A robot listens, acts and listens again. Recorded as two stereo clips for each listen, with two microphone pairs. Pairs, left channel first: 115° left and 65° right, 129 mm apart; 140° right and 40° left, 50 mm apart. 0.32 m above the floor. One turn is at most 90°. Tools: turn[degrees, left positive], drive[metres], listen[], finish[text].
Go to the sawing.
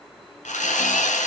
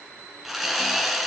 Thought: The sawing: 125° left.
Action: turn[90]
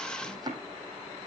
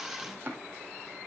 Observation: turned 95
Thought: Nothing new. It was at 30° left.
Action: turn[30]
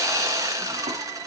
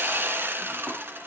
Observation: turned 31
Action: drive[1.0]
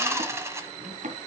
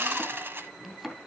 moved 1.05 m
Action: drive[1.0]
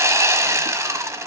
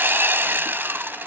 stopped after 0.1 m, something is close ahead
Action: finish[Arrived at the sawing, straight ahead.]